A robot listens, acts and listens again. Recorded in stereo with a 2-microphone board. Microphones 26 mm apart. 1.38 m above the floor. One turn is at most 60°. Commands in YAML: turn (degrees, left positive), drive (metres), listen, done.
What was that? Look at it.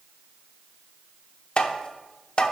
turn: 40
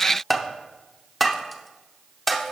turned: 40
done: "Found it: tapping, straight ahead."